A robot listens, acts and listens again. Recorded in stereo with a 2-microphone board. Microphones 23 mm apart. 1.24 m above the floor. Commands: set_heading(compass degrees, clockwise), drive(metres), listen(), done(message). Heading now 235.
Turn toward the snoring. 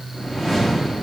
listen()
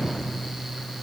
listen()
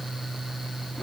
done("I can't make out snoring to turn to.")